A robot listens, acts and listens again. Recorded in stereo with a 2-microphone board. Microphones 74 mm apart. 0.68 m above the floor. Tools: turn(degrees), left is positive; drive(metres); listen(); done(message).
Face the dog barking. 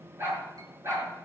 turn(degrees=-35)
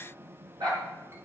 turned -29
turn(degrees=-105)
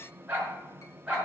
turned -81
turn(degrees=-15)
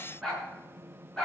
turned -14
turn(degrees=10)
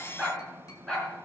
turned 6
done("Found it: a dog barking, straight ahead.")